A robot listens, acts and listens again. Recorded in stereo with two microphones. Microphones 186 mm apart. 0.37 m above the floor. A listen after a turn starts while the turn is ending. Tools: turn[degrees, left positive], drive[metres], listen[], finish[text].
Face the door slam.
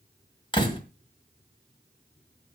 Thought: The door slam: about 30° left or 150° left.
Action: turn[30]
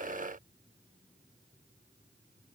Action: listen[]
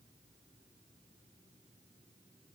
Action: finish[I heard a door slam, but can't make it out now. It was about straight ahead or 120° left.]